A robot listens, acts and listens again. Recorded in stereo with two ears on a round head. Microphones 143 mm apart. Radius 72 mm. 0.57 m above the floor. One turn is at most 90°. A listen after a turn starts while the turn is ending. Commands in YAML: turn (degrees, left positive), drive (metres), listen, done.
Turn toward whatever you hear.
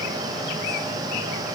listen: true
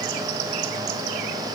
listen: true
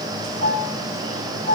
turn: 40
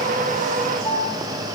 done: "Found it: a piano, straight ahead, 2 to 4 m away."